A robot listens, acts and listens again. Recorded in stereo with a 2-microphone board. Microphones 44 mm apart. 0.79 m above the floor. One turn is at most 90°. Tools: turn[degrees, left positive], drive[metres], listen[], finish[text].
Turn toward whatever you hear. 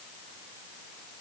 Action: listen[]
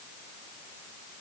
Action: listen[]
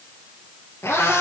Action: turn[90]
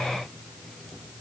Action: listen[]
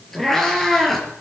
Action: finish[Facing the cat meowing.]